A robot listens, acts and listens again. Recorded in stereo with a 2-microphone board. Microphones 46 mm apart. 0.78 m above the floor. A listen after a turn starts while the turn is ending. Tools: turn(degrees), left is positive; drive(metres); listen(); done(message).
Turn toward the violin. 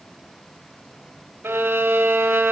turn(degrees=-90)
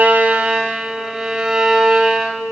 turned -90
turn(degrees=-10)
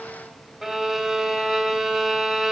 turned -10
done("Found it: a violin, straight ahead, 2 to 4 m away.")